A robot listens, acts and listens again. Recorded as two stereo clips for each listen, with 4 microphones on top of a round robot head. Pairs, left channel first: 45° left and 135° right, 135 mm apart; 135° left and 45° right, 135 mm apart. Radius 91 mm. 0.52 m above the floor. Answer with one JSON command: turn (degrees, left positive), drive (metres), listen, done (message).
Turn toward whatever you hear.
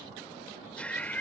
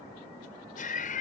{"turn": 125}
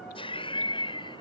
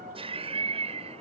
{"done": "Found it: laughter, straight ahead."}